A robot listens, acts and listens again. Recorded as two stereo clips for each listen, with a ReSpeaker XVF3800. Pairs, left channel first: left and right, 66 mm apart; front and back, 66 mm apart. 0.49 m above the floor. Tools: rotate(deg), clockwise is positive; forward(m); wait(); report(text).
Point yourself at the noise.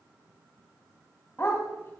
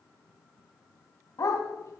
rotate(-35)
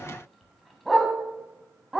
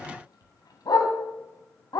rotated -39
report("Found it: a dog barking, straight ahead, 1 to 2 m away.")